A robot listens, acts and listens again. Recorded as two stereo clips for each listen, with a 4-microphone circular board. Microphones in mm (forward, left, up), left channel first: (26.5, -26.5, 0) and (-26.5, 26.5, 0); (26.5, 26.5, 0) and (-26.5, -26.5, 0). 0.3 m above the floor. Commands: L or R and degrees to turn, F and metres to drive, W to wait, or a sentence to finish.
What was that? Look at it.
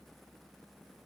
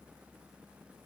W
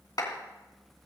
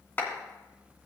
R20
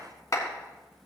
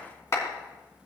Facing the clap, 2 to 4 m away.